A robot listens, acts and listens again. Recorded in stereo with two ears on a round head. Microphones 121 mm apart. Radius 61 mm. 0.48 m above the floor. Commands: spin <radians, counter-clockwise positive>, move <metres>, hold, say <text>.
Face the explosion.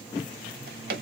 hold
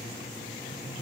hold
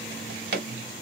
say I can't make out an explosion, only a drawer.